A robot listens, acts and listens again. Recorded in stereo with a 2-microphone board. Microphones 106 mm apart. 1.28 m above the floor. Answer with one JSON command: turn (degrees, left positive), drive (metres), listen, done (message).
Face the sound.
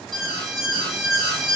{"turn": 30}
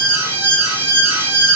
{"turn": -30}
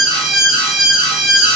{"done": "Found it: an alarm, straight ahead, 1 to 2 m away."}